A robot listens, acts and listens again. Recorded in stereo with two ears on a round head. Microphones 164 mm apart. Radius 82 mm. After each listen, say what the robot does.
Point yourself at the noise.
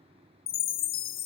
Turn 90° left.
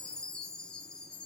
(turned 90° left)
Facing the chime, under 1 m away.